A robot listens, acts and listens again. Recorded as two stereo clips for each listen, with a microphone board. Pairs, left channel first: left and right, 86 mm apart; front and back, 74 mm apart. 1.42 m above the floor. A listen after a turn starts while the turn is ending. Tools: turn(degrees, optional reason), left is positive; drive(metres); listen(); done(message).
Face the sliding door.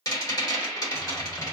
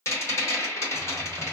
listen()
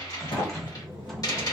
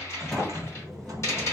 turn(degrees=85, reason="The sliding door: 85° left.")
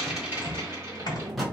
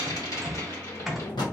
done("Found it: a sliding door, straight ahead, 1 to 2 m away.")